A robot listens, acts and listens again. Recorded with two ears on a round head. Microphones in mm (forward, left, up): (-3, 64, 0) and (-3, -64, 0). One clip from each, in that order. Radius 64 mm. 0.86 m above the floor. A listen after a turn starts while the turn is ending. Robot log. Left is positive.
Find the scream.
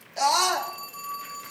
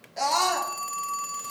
note: The scream: about 15° left or 165° left.
cmd yaw +15
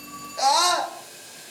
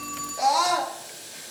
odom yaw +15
note: So it is at 150° left.
cmd yaw +150
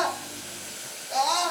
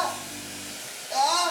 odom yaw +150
end: Facing the scream, under 1 m away.